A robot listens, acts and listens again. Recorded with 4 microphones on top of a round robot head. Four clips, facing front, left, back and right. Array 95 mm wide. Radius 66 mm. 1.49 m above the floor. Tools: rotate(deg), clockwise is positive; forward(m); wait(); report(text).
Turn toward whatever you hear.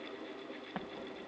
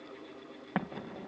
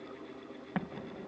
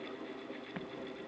rotate(-90)
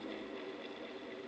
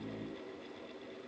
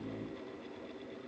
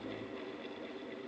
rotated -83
rotate(-10)
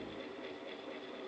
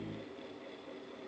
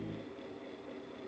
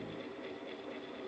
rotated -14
report("Facing where the explosion came from. I can't hear it now.")